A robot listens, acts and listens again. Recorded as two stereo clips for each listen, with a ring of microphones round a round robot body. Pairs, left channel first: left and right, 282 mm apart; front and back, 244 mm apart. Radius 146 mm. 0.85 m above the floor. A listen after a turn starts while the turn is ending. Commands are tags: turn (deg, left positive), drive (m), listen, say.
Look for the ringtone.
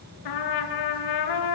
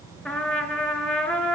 <listen/>
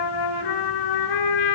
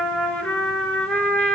<listen/>
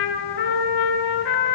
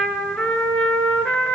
<say>I can't make out a ringtone, only a trumpet.</say>